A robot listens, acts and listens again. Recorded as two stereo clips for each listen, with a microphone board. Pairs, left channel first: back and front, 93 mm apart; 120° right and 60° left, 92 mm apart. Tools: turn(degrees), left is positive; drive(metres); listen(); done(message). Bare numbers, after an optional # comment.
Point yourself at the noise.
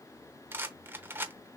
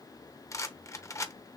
# The rattle: 65° right.
turn(-65)
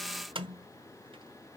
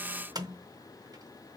# The rattle is now 15° left.
turn(15)
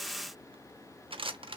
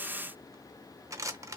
done("Found it: a rattle, straight ahead.")